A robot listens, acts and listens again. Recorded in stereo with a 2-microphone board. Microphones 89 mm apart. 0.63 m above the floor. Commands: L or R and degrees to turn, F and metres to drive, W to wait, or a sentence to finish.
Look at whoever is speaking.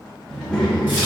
L30
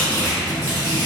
R20
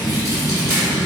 Facing the child speaking, 1 to 2 m away.